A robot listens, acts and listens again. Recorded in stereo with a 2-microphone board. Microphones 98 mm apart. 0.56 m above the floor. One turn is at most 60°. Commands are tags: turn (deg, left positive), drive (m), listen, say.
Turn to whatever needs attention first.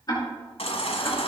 <turn deg="60"/>
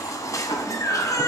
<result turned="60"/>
<turn deg="35"/>
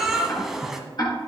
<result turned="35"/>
<say>Facing the baby crying.</say>